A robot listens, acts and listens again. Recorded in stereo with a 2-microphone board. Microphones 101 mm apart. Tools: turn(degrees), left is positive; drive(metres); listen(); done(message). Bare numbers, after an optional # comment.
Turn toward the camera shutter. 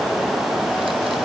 listen()
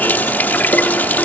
listen()
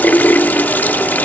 done("I can't make out a camera shutter, only a running tap.")